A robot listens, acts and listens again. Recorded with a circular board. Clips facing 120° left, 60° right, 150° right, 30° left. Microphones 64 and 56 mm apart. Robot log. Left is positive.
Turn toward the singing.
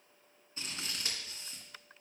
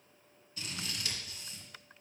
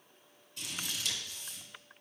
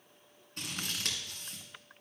cmd idle
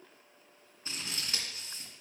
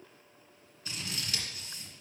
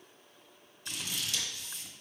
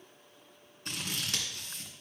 cmd idle
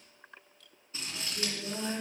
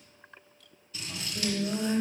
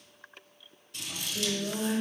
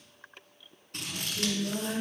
note: The singing: 120° right.
cmd yaw -120
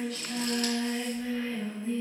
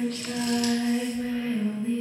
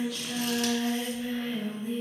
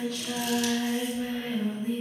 note: The singing is now 20° right.
cmd yaw -20
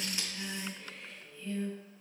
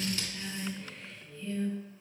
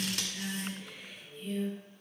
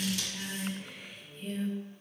end: Found it: singing, straight ahead.